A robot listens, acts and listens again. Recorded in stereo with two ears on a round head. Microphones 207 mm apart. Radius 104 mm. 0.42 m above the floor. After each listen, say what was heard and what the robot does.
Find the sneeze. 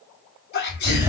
The sneeze: about 45° left or 135° left. Turn 45° left.
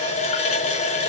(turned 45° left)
Keep listening.
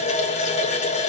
I heard a sneeze, but can't make it out now. It was about straight ahead or 90° left.